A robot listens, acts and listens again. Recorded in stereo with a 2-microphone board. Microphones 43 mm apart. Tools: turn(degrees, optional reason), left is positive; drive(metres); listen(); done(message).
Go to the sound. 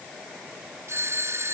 turn(degrees=-90)
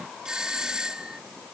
turn(degrees=-15, reason="So it is at 15° right.")
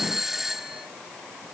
drive(metres=1.0)
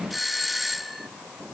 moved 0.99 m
drive(metres=1.0)
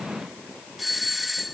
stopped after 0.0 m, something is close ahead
done("Something is in my way. I am facing the doorbell but have not reached it.")